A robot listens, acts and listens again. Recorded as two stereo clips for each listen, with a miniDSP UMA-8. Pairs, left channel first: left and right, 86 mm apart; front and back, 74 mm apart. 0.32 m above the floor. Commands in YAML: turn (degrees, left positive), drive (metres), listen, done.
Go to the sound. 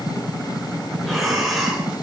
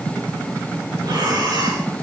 turn: 180
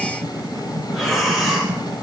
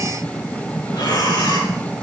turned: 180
drive: 1.0
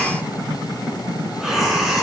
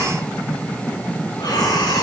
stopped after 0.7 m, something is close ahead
done: "Blocked. The breathing is further on, straight ahead."